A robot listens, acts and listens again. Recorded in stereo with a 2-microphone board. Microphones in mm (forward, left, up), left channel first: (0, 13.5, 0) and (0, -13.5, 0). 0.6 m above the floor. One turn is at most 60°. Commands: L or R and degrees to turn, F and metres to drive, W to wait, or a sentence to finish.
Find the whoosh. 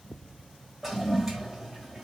W
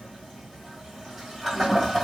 W
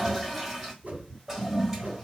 R60
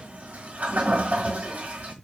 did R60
W
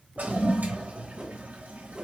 R35
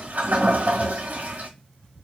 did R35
W
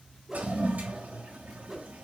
R15
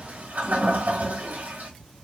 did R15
W
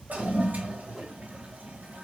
Found it: a whoosh, straight ahead, 1 to 2 m away.